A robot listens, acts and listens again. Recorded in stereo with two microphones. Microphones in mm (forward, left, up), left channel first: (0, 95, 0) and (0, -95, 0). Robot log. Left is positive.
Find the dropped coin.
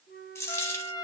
cmd yaw +30
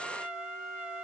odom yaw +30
cmd idle
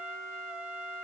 end: I heard a dropped coin, but can't make it out now. It was about 15° right or 135° left.